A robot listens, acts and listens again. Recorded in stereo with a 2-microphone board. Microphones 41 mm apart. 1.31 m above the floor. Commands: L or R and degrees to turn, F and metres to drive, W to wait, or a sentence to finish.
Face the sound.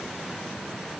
W
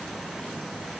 W
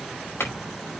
L90
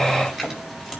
R10
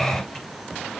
W
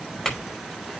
Facing the clink, over 4 m away.